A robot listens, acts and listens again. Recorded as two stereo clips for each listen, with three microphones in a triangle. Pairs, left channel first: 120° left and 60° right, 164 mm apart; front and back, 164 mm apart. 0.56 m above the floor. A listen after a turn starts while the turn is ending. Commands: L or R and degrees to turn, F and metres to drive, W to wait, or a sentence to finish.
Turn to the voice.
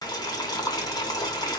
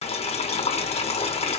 W
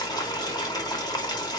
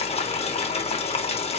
W
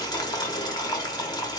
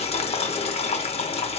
I can't make out anyone speaking to turn to.